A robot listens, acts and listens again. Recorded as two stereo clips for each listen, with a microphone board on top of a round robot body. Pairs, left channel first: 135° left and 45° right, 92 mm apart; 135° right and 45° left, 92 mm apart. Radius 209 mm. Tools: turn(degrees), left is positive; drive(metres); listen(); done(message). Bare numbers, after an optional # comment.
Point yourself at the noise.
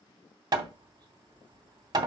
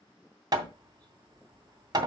done("Found it: hammering, straight ahead.")